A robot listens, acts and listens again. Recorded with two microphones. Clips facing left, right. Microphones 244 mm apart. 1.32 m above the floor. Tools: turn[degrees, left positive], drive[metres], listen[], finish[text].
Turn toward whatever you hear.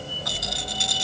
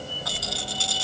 Thought: The rattle: about 20° left or 160° left.
Action: turn[20]
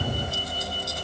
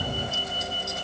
Action: listen[]
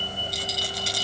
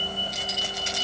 Thought: So it is at 140° left.
Action: turn[140]
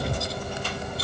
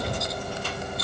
Action: listen[]
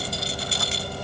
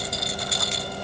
Thought: The rattle is now 30° left.
Action: turn[30]
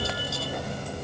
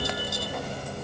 Action: listen[]
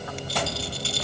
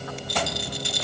Thought: The rattle is now 15° right.
Action: turn[-15]
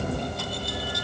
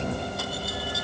Action: listen[]
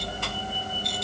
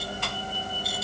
Action: listen[]
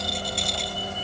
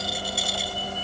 Action: finish[Facing where the rattle came from. I can't hear it now.]